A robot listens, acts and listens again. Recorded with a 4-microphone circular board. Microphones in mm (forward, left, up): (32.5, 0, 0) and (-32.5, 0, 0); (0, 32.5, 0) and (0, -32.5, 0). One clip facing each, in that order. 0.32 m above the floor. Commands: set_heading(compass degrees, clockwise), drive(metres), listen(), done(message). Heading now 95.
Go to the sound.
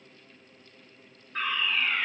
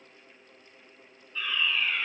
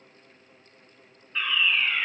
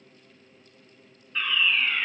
set_heading(85)
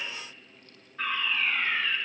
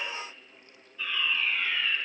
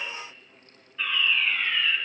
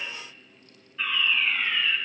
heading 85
drive(1.0)
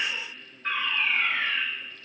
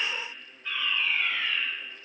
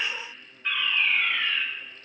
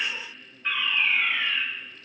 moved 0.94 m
drive(1.0)
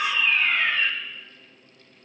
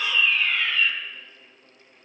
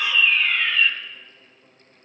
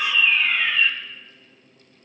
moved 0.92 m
set_heading(95)
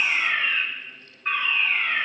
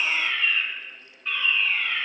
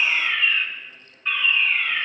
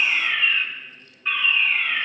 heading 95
drive(1.0)
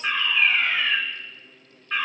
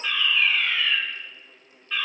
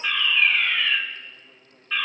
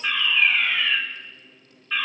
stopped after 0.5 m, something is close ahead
done("Arrived at the fire alarm, straight ahead.")